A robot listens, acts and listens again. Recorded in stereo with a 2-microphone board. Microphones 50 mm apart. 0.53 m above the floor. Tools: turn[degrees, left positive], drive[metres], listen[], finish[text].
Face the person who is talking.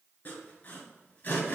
Action: listen[]
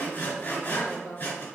Thought: The woman speaking: about 55° left or 125° left.
Action: turn[55]
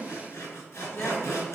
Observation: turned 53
Action: listen[]
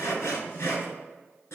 Action: listen[]
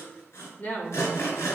Thought: So it is at 45° left.
Action: turn[45]
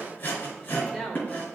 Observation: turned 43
Action: finish[Facing the woman speaking.]